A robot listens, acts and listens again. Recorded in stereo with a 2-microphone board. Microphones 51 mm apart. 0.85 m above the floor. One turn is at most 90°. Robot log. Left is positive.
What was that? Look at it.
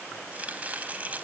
note: The chopping: about 25° right or 155° right.
cmd yaw -25
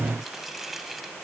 end: Found it: chopping, straight ahead.